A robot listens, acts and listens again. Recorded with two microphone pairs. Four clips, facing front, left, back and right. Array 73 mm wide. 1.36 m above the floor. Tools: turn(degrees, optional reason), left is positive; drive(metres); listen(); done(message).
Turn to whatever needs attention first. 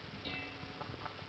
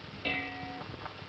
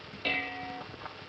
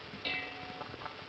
listen()
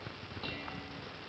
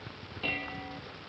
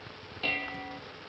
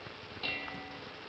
listen()
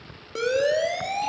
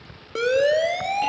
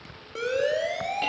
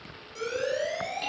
turn(degrees=75, reason="The siren: 75° left.")
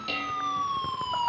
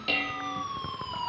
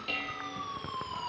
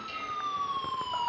turn(degrees=-15, reason="The siren is now 15° right.")
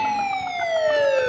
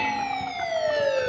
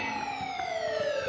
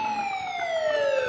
done("Facing the siren, 2 to 4 m away.")